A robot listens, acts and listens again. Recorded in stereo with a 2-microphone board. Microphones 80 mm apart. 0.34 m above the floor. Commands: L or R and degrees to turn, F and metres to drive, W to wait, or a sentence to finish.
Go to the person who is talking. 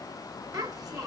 R50
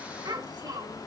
R70
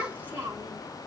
R25
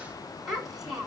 F1.0
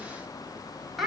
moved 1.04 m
F1.0
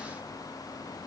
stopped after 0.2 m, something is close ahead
W
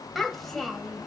I am next to the child speaking.